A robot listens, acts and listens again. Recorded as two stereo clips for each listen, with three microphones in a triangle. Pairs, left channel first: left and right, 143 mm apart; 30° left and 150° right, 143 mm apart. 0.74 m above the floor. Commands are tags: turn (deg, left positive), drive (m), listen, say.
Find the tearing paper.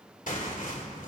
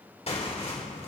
<turn deg="70"/>
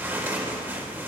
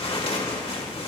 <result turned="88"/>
<turn deg="-15"/>
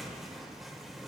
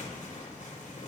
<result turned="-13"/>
<say>Found it: tearing paper, straight ahead, 2 to 4 m away.</say>